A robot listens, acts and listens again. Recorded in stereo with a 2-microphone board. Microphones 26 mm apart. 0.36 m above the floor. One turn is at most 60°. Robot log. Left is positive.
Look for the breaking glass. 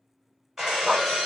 note: The breaking glass: about 15° right or 165° right.
cmd yaw -15
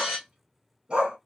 end: Facing the breaking glass, 1 to 2 m away.